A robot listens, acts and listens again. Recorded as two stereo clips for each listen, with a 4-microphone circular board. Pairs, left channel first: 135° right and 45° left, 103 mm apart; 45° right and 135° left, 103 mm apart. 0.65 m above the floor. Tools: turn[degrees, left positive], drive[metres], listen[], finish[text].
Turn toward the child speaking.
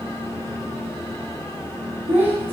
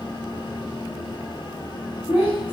Thought: The child speaking: 25° right.
Action: turn[-25]
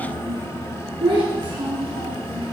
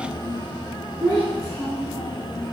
Thought: The child speaking is now 15° left.
Action: turn[15]
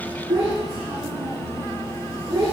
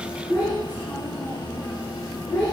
Action: finish[Found it: a child speaking, straight ahead.]